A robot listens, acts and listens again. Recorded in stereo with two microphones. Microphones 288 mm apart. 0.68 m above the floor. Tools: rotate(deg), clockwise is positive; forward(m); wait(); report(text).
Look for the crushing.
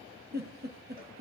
wait()
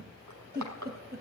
rotate(90)
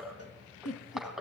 report("Facing the crushing.")